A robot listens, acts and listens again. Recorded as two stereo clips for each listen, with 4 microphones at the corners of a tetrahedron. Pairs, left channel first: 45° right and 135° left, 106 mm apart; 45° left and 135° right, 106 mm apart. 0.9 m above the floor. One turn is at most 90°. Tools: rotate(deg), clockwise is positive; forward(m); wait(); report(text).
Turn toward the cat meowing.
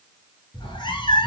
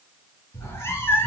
rotate(20)
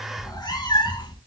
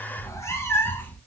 rotate(20)
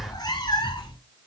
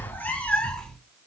rotate(35)
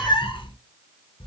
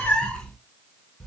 rotate(45)
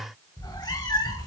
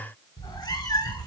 report("Facing the cat meowing.")